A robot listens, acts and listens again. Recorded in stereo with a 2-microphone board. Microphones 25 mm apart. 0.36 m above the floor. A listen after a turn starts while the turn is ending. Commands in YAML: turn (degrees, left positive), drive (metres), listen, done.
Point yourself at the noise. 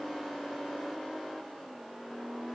listen: true
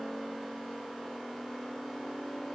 listen: true
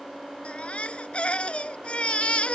turn: 55
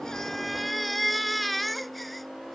done: "Found it: a baby crying, straight ahead."